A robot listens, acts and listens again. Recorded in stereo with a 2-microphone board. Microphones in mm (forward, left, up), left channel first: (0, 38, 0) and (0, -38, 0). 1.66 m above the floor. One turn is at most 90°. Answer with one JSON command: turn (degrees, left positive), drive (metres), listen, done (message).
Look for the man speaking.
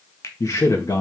{"turn": 50}
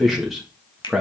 {"done": "Found it: a man speaking, straight ahead, 1 to 2 m away."}